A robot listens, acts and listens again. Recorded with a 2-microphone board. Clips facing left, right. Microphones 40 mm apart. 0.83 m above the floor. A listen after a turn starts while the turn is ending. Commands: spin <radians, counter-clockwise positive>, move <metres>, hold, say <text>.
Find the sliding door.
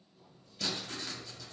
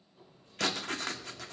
spin -0.61
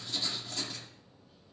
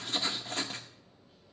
say Found it: a sliding door, straight ahead.